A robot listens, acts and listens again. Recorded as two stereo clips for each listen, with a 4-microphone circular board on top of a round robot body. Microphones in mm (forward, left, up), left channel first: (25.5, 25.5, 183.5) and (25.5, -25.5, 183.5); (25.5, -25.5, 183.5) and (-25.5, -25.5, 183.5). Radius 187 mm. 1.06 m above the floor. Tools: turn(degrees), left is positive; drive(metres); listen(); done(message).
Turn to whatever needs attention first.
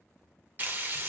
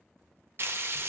listen()
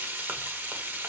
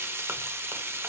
listen()
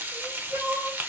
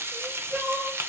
turn(degrees=-110)
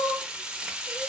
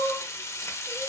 turn(degrees=15)
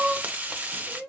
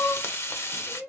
done("Found it: crying, straight ahead, under 1 m away.")